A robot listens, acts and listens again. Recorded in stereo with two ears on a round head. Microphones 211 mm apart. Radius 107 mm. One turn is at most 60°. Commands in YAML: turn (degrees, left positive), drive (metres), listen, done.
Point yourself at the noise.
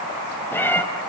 turn: 30
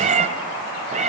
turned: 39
turn: -30
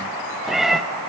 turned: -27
done: "Found it: a cat meowing, straight ahead."